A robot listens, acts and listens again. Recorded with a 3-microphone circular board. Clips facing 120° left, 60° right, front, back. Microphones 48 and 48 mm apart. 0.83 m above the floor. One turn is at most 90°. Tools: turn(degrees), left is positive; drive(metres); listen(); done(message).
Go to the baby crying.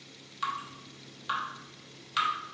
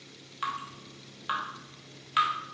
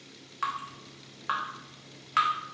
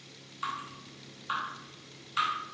listen()
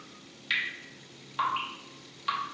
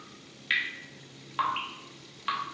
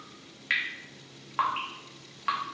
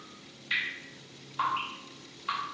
listen()
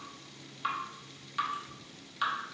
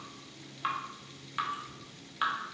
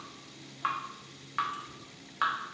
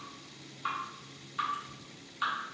done("I can't make out a baby crying to turn to.")